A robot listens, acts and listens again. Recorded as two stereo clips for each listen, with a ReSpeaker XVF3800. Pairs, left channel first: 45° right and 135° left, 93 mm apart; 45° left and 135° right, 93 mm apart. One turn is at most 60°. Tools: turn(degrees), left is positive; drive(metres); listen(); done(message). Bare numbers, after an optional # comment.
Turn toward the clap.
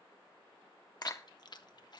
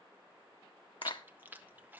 # The clap: 15° left.
turn(15)
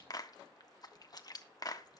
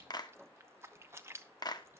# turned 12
done("Found it: a clap, straight ahead, under 1 m away.")